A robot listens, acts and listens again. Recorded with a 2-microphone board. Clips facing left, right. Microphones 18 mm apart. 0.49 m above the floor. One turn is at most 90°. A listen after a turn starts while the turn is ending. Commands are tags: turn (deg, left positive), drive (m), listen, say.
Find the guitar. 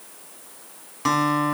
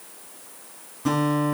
<turn deg="60"/>
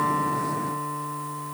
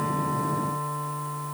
<say>Facing the guitar, 1 to 2 m away.</say>